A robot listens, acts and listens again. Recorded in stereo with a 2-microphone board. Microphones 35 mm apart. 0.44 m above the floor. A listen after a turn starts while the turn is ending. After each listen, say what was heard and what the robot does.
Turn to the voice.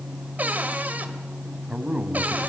The man speaking: about 20° right or 160° right. Turn 20° right.
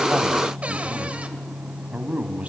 So it is at 140° right. Turn 140° right.
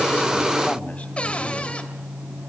Keep listening.
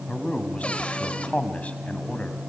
The man speaking is now 40° left. Turn 40° left.
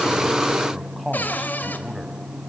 Found it: a man speaking, straight ahead, 2 to 4 m away.